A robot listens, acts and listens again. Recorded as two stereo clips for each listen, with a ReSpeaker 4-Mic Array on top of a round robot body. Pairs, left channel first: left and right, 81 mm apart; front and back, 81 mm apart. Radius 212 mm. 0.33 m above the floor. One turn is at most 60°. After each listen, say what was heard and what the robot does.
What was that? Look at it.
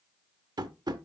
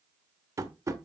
The tapping: 125° right. Turn 60° right.
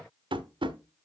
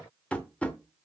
The tapping is now 75° right. Turn 60° right.
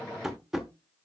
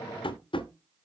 Facing the tapping, 1 to 2 m away.